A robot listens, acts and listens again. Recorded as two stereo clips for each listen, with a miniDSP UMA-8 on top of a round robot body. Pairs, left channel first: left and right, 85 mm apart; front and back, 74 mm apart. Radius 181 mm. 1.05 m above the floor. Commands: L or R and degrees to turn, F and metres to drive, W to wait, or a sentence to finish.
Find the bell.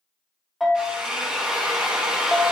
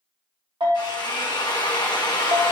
L180
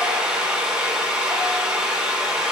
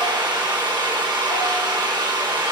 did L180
W
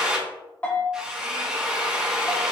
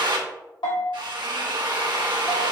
L20
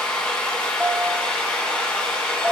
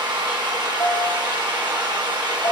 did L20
Facing the bell.